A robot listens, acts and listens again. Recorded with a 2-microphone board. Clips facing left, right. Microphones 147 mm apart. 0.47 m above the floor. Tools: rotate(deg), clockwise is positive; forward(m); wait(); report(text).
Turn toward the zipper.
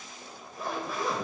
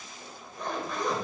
rotate(-30)
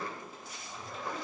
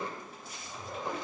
rotate(25)
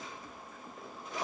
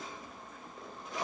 report("Found it: a zipper, straight ahead.")